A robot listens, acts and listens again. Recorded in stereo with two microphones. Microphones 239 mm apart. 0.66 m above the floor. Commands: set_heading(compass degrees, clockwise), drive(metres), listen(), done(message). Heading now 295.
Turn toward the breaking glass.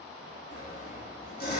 listen()
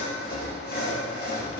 listen()
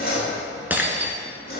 set_heading(325)
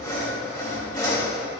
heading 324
listen()
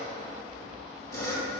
done("I heard breaking glass, but can't make it out now. It was about 20° left or 145° right.")